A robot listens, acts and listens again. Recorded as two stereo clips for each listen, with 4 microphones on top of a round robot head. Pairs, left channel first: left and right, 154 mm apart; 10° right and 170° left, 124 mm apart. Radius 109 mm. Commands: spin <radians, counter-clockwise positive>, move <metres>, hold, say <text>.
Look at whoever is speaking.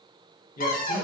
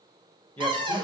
spin 1.13
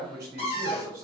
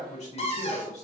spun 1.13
spin -0.35
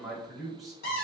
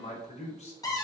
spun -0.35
say Facing the man speaking, 1 to 2 m away.